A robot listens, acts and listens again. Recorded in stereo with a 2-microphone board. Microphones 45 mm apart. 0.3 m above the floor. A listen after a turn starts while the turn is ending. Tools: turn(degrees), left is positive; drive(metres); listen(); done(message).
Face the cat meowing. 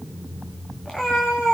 turn(degrees=15)
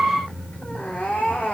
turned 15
turn(degrees=30)
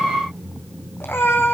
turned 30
turn(degrees=120)
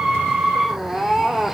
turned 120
done("Facing the cat meowing, 1 to 2 m away.")